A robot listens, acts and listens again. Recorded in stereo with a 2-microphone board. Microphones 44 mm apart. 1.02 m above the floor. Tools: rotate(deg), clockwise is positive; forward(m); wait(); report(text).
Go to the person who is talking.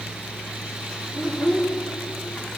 rotate(-30)
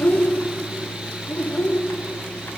rotate(-145)
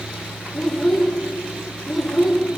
forward(1.0)
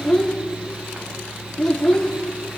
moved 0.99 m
rotate(-15)
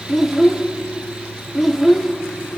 forward(1.0)
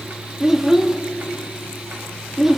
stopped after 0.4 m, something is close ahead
rotate(10)
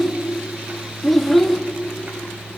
report("I am next to the child speaking.")